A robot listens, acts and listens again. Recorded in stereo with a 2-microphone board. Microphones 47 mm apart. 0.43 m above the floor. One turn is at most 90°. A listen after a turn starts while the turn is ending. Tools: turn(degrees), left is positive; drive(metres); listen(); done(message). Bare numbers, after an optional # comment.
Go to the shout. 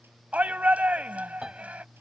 # The shout: about 30° right or 150° right.
turn(-30)
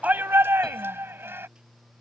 # So it is at 115° right.
turn(-90)
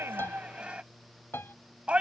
# The shout is now 30° right.
turn(-30)
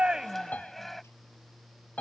drive(1.0)
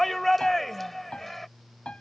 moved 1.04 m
drive(1.0)
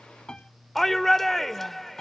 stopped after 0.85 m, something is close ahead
# The shout is now 10° left.
turn(10)
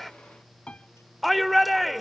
done("I am next to the shout.")